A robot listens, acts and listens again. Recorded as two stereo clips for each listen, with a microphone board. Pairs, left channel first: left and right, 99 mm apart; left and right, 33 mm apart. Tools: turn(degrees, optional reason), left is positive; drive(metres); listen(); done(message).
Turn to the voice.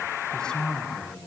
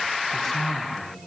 turn(degrees=30)
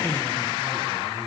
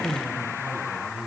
turn(degrees=-15, reason="So it is at 15° right.")
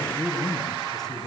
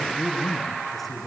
done("Facing the man speaking, over 4 m away.")